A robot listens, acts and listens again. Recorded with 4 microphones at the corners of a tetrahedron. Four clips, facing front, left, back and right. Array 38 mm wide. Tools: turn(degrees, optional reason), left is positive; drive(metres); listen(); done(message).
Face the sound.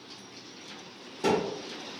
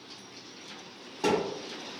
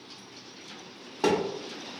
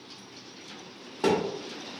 turn(degrees=-160, reason="The thud: 160° right.")
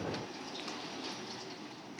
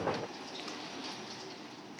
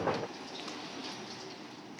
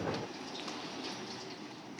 done("Facing where the thud came from. I can't hear it now.")